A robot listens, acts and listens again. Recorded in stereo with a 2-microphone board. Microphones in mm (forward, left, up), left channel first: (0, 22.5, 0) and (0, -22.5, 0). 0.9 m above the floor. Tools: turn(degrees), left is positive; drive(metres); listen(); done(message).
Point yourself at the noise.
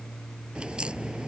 turn(degrees=-20)
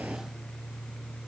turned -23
listen()
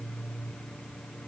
done("I heard a crack, but can't make it out now. It was about straight ahead or 135° right.")